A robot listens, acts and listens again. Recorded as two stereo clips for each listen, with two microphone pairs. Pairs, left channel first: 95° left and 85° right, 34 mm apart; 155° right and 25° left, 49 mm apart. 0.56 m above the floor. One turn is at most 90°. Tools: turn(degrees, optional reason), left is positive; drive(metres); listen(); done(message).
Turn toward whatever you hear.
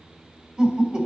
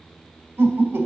turn(degrees=-25, reason="The laughter: 25° right.")
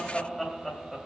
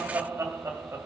done("Facing the laughter.")